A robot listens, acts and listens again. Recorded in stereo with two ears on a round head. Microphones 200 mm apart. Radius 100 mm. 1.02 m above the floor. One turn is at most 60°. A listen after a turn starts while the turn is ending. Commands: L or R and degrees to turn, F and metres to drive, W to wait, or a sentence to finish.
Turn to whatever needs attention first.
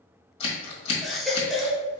L30
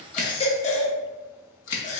L60
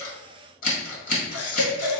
L60
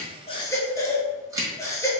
L15
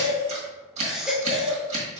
Found it: a baby crying, straight ahead.